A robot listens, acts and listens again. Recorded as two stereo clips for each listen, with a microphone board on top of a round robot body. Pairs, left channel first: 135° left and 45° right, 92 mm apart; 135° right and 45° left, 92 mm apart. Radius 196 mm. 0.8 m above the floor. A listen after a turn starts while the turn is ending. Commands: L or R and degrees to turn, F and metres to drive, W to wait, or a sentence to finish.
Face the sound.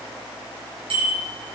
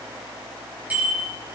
R30
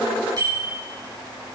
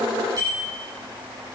Facing the bicycle bell, over 4 m away.